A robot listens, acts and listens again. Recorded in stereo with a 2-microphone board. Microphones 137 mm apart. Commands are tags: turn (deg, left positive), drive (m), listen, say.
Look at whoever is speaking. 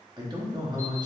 <turn deg="-30"/>
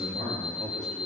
<turn deg="-120"/>
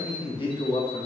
<turn deg="40"/>
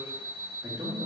<turn deg="-25"/>
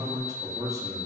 <turn deg="-25"/>
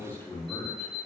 <turn deg="15"/>
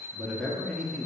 <say>Found it: a man speaking, straight ahead, under 1 m away.</say>